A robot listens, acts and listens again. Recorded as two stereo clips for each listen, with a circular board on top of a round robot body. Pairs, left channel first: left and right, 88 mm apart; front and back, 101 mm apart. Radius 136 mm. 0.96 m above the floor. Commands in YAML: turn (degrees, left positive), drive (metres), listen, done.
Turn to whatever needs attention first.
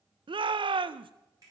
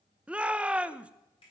turn: -100
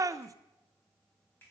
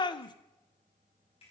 turn: -40
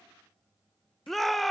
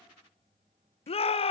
done: "Facing the shout, under 1 m away."